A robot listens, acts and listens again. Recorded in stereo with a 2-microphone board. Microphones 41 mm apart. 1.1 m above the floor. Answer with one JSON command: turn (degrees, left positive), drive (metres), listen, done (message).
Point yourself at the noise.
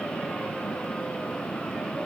{"listen": true}
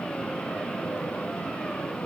{"listen": true}
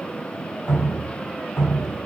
{"turn": 90}
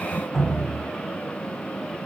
{"done": "Facing the dripping."}